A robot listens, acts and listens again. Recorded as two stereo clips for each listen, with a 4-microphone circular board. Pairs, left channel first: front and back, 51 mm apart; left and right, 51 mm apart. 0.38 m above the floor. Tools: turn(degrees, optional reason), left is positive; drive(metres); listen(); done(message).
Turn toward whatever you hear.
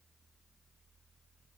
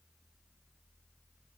listen()
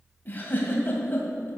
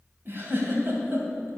turn(degrees=-50, reason="The giggle: 50° right.")
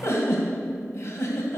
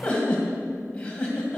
turn(degrees=20, reason="The giggle is now 20° left.")
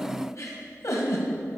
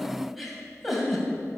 done("Facing the giggle.")